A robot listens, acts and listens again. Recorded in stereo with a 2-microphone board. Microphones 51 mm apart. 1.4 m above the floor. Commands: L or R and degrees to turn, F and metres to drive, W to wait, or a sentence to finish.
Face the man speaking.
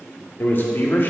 L45
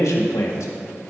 L80
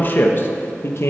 L60
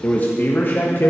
L45
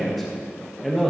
Found it: a man speaking, straight ahead.